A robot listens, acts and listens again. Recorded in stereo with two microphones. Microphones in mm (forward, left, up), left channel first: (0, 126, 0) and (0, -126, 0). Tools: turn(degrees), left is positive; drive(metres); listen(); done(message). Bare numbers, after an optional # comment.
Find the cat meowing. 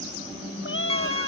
# The cat meowing: about 50° left or 130° left.
turn(50)
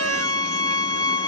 listen()
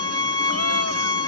listen()
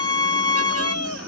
# So it is at 80° left.
turn(80)
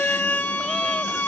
listen()
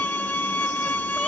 listen()
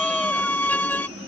done("I heard a cat meowing from this way, but can't make it out now.")